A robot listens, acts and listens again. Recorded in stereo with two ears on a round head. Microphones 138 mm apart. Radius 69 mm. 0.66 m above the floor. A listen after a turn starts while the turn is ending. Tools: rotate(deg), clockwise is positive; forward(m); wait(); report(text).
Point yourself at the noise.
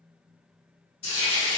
rotate(-40)
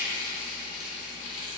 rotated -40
rotate(-95)
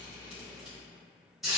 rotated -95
report("Facing the frying.")